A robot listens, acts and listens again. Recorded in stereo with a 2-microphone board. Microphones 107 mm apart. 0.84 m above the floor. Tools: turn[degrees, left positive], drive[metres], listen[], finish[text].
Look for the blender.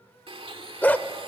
Thought: The blender: about 55° right or 125° right.
Action: turn[-55]
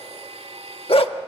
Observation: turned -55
Thought: So it is at 70° right.
Action: turn[-70]
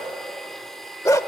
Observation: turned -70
Action: finish[Facing the blender.]